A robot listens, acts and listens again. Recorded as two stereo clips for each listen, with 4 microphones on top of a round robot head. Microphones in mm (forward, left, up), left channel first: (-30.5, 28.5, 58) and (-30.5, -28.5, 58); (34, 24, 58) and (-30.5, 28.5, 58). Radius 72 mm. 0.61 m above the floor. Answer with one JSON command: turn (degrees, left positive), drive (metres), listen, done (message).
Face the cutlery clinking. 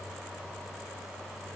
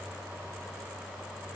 {"listen": true}
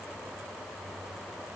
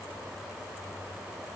{"listen": true}
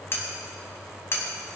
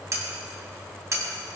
{"turn": 135}
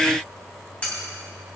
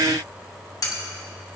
{"turn": 20}
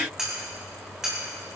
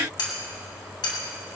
{"done": "Found it: cutlery clinking, straight ahead."}